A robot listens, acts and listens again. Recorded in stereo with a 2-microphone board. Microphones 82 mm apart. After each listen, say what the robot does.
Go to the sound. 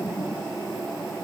Keep listening.
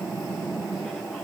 Keep listening.
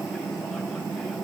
I can't make out anything.